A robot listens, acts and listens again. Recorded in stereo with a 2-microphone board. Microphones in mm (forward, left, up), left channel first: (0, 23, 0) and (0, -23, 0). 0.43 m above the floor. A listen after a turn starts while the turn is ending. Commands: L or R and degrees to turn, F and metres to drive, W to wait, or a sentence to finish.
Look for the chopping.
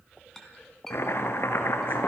L60
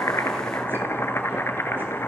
L55
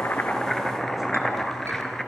L10
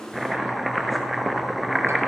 Found it: chopping, straight ahead, 1 to 2 m away.